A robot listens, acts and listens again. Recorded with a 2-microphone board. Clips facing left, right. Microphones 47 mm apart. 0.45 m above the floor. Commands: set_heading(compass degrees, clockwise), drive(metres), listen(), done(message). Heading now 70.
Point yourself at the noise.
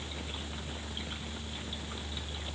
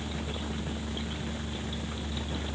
listen()
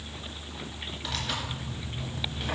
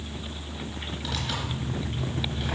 set_heading(40)
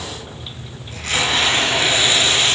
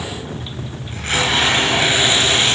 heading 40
set_heading(70)
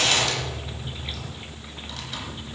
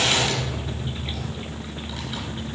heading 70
set_heading(80)
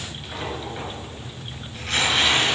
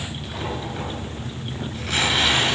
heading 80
done("Facing the tearing paper, 2 to 4 m away.")